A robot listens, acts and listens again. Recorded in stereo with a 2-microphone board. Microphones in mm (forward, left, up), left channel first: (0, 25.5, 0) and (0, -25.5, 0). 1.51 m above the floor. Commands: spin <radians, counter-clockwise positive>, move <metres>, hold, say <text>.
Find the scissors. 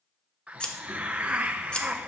spin 0.35
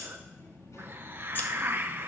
hold
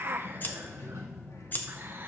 spin 2.44
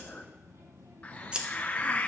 spin -0.35
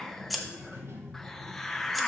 say Found it: scissors, straight ahead.